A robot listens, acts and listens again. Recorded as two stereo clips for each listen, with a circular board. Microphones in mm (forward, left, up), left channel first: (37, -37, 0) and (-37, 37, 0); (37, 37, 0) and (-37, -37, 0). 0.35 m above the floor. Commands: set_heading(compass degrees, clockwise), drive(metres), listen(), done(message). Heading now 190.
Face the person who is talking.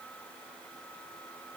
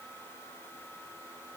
listen()
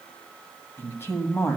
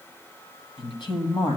set_heading(170)
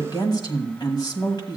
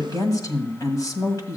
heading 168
done("Found it: a woman speaking, straight ahead, 1 to 2 m away.")